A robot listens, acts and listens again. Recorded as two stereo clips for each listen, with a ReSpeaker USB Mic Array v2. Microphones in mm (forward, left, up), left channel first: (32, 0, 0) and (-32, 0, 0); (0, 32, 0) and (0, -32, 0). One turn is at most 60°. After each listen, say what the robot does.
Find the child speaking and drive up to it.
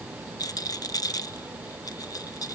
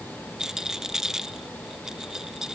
Keep listening.
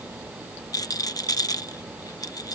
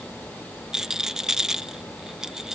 Keep listening.
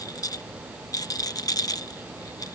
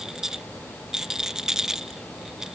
I can't make out a child speaking, only a rattle.